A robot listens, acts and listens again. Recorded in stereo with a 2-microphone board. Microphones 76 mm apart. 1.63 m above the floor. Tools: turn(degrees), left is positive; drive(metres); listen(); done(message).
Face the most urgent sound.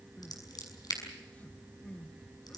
turn(degrees=20)
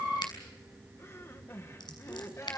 turn(degrees=145)
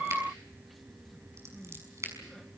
done("Found it: crying, straight ahead.")